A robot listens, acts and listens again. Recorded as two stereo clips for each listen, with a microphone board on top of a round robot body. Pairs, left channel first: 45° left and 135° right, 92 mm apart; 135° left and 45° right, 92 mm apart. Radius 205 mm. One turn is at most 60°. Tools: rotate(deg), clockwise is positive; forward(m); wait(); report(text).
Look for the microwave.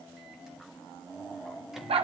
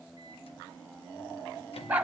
wait()
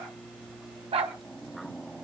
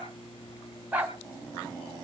rotate(-60)
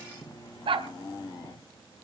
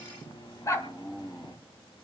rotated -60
rotate(-60)
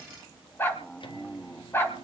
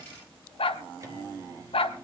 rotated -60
rotate(-35)
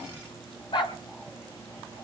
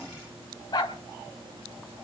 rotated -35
wait()
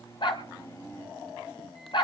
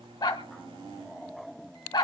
rotate(15)
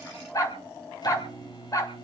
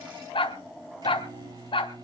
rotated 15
report("Found it: a microwave, straight ahead.")